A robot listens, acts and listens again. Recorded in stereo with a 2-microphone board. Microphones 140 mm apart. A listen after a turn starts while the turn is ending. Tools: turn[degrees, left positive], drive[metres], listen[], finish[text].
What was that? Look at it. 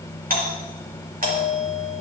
Thought: The doorbell: about 70° right or 110° right.
Action: turn[-70]
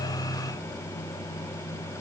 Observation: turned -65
Action: listen[]
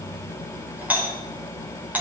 Thought: So it is at 10° right.
Action: turn[-10]
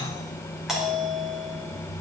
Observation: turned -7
Action: finish[Found it: a doorbell, straight ahead.]